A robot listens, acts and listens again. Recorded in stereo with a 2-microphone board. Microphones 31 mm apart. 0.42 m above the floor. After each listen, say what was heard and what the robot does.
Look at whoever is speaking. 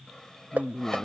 The woman speaking: about 55° left or 125° left. Turn 55° left.
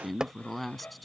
Found it: a woman speaking, straight ahead.